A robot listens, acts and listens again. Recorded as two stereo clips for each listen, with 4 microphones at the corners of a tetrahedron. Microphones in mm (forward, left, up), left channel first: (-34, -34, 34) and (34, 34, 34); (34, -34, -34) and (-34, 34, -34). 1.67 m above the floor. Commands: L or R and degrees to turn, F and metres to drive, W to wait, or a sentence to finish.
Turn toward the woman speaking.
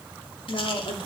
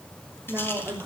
R160
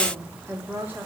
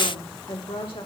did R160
R25
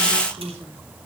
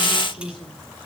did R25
R20
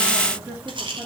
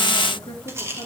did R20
R15
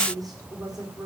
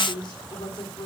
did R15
Found it: a woman speaking, straight ahead.